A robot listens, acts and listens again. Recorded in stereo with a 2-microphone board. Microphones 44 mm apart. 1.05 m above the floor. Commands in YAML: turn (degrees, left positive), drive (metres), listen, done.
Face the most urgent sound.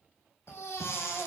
turn: 90
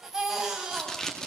turn: -10
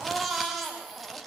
done: "Facing the baby crying."